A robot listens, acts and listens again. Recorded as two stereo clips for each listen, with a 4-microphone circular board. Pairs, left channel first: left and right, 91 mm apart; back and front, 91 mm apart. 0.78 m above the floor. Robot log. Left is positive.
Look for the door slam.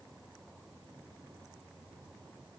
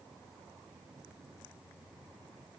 cmd idle
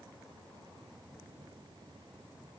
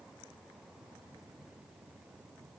cmd idle
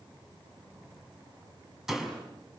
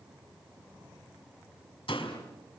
note: The door slam: 175° right.
cmd yaw -175
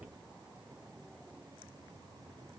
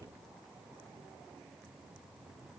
end: I heard a door slam from this way, but can't make it out now.